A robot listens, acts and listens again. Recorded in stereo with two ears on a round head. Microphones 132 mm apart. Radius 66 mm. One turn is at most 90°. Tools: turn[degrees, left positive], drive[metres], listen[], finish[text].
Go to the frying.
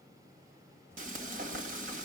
Thought: The frying: about 55° right or 125° right.
Action: turn[-55]
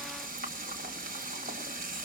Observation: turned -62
Thought: So it is at 60° right.
Action: turn[-60]
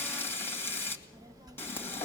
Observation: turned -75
Thought: The frying is now 15° left.
Action: turn[15]
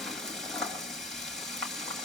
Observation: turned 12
Action: drive[1.0]
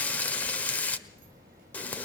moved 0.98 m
Thought: The frying is now 10° left.
Action: turn[10]
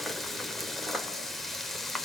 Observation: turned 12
Action: drive[1.0]
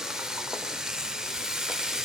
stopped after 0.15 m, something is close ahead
Action: finish[I am next to the frying.]